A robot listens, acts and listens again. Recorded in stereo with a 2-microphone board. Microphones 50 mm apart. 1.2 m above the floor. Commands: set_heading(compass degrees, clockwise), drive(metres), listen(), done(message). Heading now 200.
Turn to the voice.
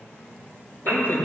set_heading(140)
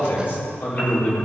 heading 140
set_heading(95)
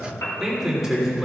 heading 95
done("Found it: a man speaking, straight ahead.")